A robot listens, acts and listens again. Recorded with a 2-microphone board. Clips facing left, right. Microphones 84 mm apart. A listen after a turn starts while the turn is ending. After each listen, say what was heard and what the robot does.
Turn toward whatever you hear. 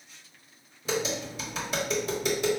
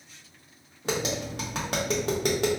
The tapping: about 65° right or 115° right. Turn 65° right.
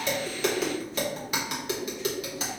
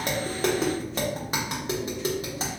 So it is at 35° right. Turn 35° right.
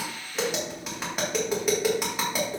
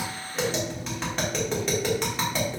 The tapping is now 10° left. Turn 10° left.
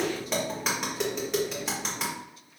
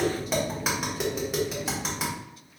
Facing the tapping.